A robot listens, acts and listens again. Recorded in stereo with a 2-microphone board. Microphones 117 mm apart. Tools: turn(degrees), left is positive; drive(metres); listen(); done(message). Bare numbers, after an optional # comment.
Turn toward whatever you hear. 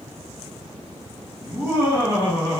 # The laughter: about 40° left or 140° left.
turn(40)
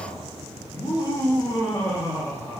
# So it is at 20° left.
turn(20)
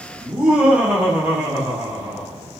# The laughter is now 15° right.
turn(-15)
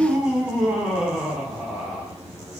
done("Found it: laughter, straight ahead, 1 to 2 m away.")